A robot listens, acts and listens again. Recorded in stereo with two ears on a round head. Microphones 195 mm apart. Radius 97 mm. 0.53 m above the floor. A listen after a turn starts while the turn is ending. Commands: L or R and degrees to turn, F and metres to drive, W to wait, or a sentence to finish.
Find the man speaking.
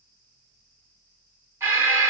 W
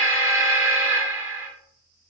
W
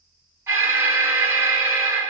I can't make out a man speaking, only an alarm.